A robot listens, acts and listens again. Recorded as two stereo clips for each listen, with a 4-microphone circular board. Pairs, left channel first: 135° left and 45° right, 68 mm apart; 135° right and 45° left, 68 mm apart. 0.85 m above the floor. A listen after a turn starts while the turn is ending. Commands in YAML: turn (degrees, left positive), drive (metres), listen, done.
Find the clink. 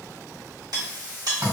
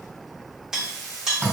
turn: -35
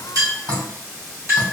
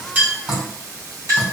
done: "Found it: a clink, straight ahead."